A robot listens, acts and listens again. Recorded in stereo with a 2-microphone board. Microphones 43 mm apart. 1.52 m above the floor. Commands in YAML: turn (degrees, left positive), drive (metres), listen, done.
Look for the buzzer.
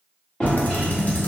listen: true
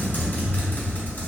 listen: true
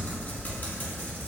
done: "I can't make out a buzzer, only typing on a keyboard and a drawer."